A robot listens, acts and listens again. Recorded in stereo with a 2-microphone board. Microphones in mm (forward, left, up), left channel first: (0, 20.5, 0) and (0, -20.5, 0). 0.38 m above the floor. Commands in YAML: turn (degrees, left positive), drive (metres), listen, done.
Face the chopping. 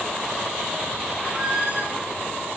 listen: true
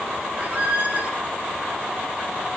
listen: true
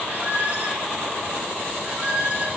done: "I can't make out chopping, only a squeak."